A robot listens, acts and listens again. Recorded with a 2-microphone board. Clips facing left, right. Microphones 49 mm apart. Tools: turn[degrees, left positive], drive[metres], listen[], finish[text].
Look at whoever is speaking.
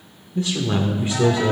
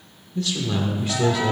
Thought: The man speaking: about 20° left or 160° left.
Action: turn[20]
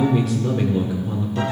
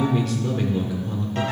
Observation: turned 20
Action: finish[Facing the man speaking.]